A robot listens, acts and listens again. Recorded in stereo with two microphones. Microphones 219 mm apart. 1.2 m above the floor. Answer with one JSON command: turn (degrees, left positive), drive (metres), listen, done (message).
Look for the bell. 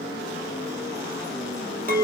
{"listen": true}
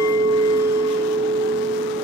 {"listen": true}
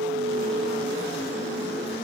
{"done": "I can't make out a bell to turn to."}